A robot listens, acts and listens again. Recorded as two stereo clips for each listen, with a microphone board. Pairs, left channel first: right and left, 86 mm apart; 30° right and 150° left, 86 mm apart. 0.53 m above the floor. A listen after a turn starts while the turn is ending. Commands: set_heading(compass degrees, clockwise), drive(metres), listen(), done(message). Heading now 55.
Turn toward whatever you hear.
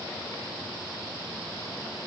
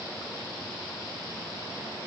listen()
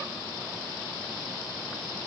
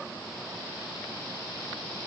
listen()
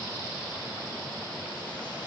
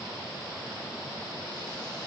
done("I can't make out anything to turn to.")